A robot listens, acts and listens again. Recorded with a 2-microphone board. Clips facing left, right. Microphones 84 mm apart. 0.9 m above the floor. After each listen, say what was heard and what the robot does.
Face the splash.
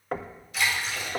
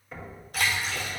The splash: about 55° right or 125° right. Turn 55° right.
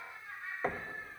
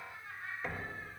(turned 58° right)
Keep listening.
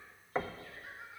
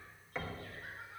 I heard a splash, but can't make it out now. It was about 5° left or 70° right.